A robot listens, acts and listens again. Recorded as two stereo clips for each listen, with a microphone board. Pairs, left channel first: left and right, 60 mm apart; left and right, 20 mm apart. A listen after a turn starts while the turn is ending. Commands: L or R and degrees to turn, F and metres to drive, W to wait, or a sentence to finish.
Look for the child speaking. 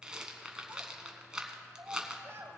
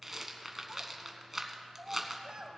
R45
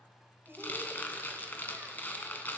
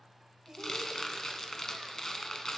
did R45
R40
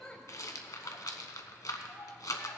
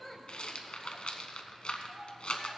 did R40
W
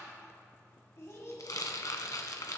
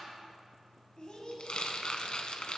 L50
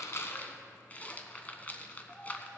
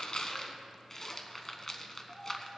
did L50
Found it: a child speaking, straight ahead.